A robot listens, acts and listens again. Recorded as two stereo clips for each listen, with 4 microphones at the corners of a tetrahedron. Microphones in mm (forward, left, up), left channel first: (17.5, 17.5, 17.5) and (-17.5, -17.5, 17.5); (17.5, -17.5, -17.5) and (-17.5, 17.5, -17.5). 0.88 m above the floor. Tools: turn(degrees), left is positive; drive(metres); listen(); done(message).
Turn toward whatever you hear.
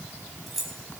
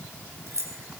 turn(degrees=140)
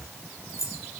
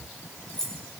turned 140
turn(degrees=35)
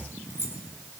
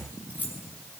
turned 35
turn(degrees=10)
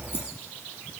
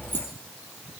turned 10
listen()
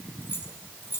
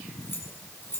done("Found it: keys jangling, straight ahead.")